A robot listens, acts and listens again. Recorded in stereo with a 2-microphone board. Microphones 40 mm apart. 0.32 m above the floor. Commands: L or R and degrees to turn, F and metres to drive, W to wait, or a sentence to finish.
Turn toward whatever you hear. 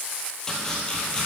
L15
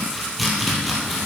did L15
Facing the chopping, 2 to 4 m away.